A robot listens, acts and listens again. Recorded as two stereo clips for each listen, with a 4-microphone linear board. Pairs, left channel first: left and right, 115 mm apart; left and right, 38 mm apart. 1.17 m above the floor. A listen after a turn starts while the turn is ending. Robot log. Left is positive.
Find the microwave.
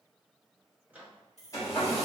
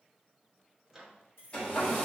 cmd yaw -30
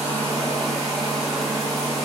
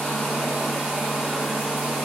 cmd idle
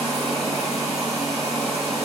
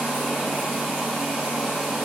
cmd idle
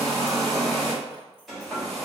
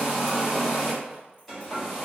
end: I heard a microwave, but can't make it out now. It was about 20° left or 140° right.